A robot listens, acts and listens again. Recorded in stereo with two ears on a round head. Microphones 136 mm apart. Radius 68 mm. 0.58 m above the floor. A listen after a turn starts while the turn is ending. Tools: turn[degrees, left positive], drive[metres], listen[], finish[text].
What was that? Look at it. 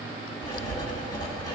Thought: The writing: about 25° left or 155° left.
Action: turn[25]
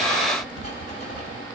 Thought: So it is at 130° left.
Action: turn[130]
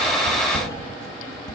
Thought: The writing is now 25° left.
Action: turn[25]
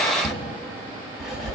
Action: finish[Found it: writing, straight ahead.]